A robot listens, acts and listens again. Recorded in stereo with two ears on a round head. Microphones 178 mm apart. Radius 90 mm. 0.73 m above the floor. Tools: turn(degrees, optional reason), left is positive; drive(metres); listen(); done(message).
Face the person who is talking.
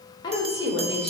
turn(degrees=25, reason="The woman speaking: about 25° left or 155° left.")
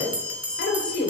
turn(degrees=125, reason="So it is at 125° left.")
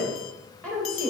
done("Found it: a woman speaking, straight ahead.")